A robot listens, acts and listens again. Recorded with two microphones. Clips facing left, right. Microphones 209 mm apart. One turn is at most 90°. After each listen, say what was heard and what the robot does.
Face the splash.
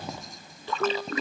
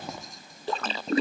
The splash: about 35° right or 145° right. Turn 35° right.
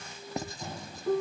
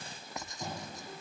Keep listening.
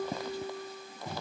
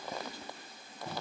I heard a splash, but can't make it out now. It was about straight ahead or 110° right.